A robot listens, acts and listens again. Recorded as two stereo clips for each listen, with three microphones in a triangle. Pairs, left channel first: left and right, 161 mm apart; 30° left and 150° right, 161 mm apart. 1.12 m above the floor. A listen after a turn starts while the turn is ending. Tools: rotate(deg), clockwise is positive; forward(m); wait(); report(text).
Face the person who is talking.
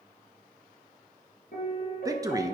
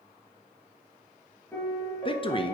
rotate(25)
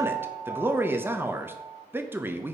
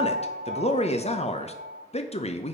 rotate(15)
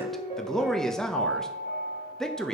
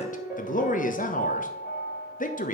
report("Facing the man speaking, 1 to 2 m away.")